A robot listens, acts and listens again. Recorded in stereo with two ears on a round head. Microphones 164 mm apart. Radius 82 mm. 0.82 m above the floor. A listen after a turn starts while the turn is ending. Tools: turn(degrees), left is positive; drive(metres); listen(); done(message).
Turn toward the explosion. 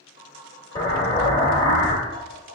turn(degrees=25)
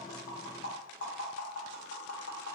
listen()
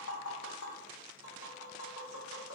done("I heard an explosion, but can't make it out now. It was about straight ahead or 130° left.")